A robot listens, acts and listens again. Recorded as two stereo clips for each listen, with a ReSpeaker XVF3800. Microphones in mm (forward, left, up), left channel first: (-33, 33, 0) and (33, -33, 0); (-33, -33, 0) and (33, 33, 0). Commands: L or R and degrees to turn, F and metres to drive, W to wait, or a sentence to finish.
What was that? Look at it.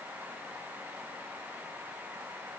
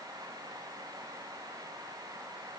W
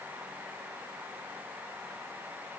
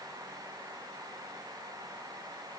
W
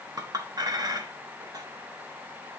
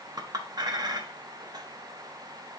Found it: a clink, straight ahead.